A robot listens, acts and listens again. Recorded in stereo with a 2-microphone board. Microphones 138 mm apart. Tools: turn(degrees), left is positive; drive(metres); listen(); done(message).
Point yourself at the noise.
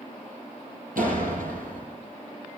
turn(degrees=-90)
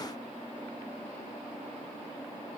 done("Facing where the door slam came from. I can't hear it now.")